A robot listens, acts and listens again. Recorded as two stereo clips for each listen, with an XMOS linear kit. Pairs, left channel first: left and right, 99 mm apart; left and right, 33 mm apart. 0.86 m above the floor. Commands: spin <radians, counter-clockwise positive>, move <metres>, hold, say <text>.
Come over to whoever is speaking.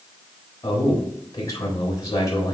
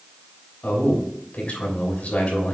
spin 0.61
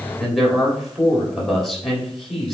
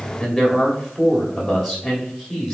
move 1.0
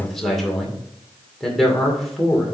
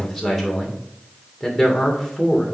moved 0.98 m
move 1.0
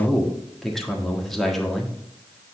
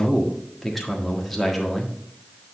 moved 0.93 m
move 1.0
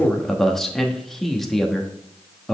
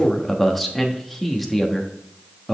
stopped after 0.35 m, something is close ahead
say Arrived at the man speaking, straight ahead.